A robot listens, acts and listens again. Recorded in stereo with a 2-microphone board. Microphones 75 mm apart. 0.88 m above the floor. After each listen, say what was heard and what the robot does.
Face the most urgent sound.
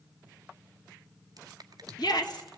The shout: about 70° left or 110° left. Turn 70° left.
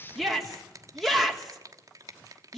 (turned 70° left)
Facing the shout.